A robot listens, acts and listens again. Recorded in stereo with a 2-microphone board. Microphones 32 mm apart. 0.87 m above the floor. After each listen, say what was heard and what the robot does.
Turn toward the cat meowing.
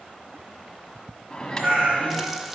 The cat meowing: about 50° right or 130° right. Turn 50° right.
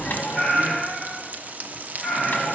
Found it: a cat meowing, straight ahead.